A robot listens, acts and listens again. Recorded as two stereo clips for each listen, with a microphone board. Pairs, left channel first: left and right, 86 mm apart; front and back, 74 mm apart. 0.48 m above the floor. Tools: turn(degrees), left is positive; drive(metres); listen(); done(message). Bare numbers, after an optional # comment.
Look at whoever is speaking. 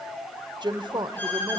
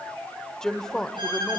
# The woman speaking: 80° right.
turn(-80)
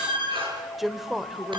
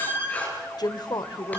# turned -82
done("Found it: a woman speaking, straight ahead.")